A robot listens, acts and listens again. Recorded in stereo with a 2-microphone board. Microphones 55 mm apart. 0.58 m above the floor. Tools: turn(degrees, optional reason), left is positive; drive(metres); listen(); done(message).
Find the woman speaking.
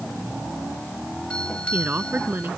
turn(degrees=-35, reason="The woman speaking: about 35° right or 145° right.")
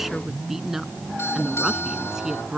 turn(degrees=-10, reason="So it is at 10° right.")
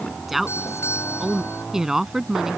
turn(degrees=-10, reason="The woman speaking is now 10° right.")
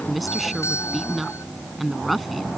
done("Facing the woman speaking.")